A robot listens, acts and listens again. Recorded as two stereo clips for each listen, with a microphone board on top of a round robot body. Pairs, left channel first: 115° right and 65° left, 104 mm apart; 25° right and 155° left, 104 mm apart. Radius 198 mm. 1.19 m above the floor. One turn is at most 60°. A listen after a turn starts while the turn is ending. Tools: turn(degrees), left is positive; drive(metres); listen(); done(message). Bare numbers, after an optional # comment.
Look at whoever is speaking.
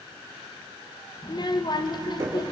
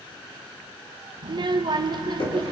# The child speaking: 160° right.
turn(-60)
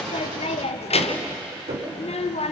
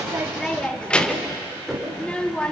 # The child speaking is now 105° right.
turn(-60)
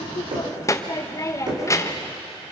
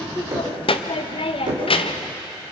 # The child speaking is now 50° right.
turn(-50)
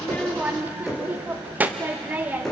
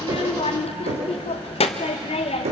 done("Facing the child speaking.")